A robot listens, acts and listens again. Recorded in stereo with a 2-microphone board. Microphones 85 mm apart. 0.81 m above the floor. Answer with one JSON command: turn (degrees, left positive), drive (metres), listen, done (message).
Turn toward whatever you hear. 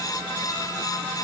{"listen": true}
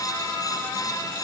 {"listen": true}
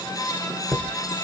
{"turn": 30}
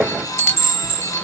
{"turn": 145}
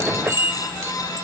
{"turn": -40}
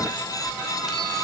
{"listen": true}
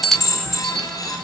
{"done": "Found it: a chime, straight ahead."}